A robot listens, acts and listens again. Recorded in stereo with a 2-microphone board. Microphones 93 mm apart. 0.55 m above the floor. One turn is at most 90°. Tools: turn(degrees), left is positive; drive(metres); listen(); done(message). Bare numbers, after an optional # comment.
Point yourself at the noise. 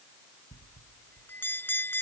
# The bell: about 20° left or 160° left.
turn(20)
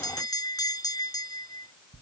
# So it is at 135° left.
turn(90)
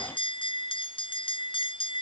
# The bell is now 65° left.
turn(65)
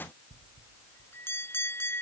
# The bell is now 25° left.
turn(25)
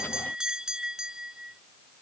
done("Facing the bell.")